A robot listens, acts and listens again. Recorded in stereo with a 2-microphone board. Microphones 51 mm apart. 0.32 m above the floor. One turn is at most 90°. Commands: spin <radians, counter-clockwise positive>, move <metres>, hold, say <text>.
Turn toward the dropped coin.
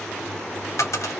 spin 1.57
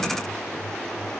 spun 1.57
say I heard a dropped coin from this way, but can't make it out now.